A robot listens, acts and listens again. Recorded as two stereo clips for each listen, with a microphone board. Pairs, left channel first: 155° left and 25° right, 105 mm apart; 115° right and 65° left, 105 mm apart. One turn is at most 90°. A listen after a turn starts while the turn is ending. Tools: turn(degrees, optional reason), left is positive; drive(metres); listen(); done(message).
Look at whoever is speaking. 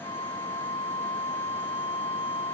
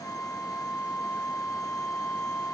listen()
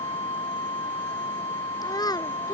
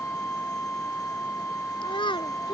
turn(degrees=-90, reason="The child speaking: 150° right.")
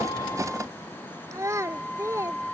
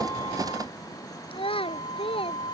turn(degrees=-85, reason="The child speaking is now 85° right.")
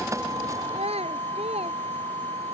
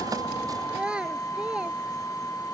turn(degrees=-15, reason="The child speaking is now 15° right.")
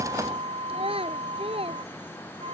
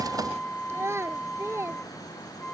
done("Found it: a child speaking, straight ahead.")